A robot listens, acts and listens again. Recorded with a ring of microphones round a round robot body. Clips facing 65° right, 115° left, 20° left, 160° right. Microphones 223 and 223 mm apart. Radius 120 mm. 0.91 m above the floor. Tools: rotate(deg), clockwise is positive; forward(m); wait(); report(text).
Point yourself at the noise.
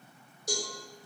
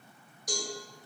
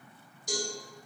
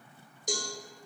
rotate(130)
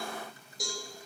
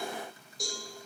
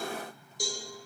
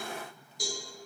rotate(-20)
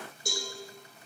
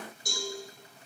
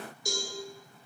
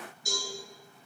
report("Found it: a cowbell, straight ahead, 1 to 2 m away.")